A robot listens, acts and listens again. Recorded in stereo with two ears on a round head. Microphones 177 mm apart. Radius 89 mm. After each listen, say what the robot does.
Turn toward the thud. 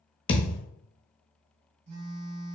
Turn 25° left.
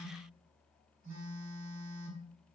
Keep listening.
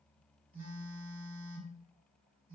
I heard a thud, but can't make it out now. It was about straight ahead or 130° left.